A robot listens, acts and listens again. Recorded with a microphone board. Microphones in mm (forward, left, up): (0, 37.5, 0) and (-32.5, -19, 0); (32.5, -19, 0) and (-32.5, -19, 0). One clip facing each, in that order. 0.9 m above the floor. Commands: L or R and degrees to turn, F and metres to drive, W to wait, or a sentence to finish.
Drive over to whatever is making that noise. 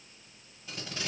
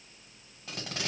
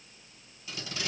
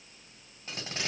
R135
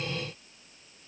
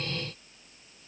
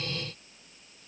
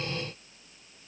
W
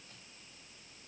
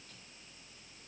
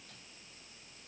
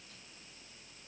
W
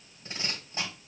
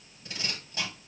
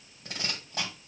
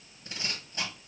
F1.0
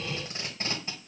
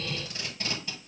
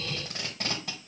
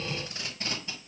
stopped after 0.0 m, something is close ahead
Blocked. The tape being pulled is further on, straight ahead.